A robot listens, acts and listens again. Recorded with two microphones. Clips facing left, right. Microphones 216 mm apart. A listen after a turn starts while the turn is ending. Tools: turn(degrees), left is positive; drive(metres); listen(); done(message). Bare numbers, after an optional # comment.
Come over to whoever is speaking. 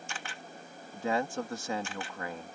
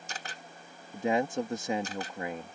# The man speaking: about 20° right or 160° right.
turn(-20)
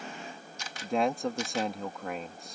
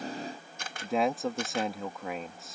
drive(1.0)
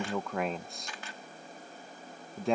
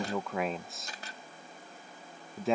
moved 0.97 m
drive(1.0)
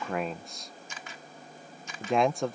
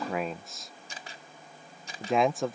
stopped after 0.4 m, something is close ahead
done("Arrived at the man speaking, straight ahead.")